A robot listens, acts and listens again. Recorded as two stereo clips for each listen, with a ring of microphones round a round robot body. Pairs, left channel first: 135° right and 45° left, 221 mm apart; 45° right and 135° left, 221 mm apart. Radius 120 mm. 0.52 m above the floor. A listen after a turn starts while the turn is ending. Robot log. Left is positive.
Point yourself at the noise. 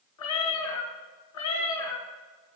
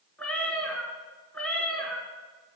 note: The cat meowing: 130° right.
cmd yaw -130
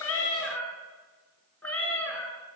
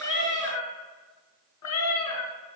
note: The cat meowing is now 50° right.
cmd yaw -50
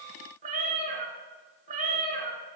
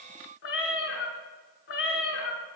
note: The cat meowing is now 10° right.
cmd yaw -10
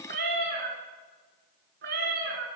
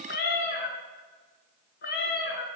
end: Found it: a cat meowing, straight ahead, under 1 m away.